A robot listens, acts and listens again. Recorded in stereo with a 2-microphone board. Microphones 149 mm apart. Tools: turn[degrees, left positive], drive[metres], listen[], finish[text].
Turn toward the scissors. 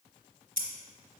Thought: The scissors: about 70° right or 110° right.
Action: turn[-70]
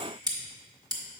Thought: So it is at 30° right.
Action: turn[-30]
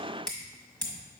Action: finish[Facing the scissors.]